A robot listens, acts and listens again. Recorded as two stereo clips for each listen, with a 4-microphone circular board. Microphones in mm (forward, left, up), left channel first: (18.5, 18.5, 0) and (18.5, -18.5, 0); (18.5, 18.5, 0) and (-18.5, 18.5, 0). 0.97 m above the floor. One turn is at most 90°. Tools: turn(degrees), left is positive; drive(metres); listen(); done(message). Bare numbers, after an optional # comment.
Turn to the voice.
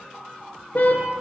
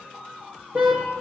listen()
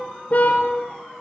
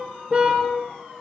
listen()
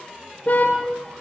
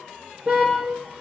done("I can't make out anyone speaking to turn to.")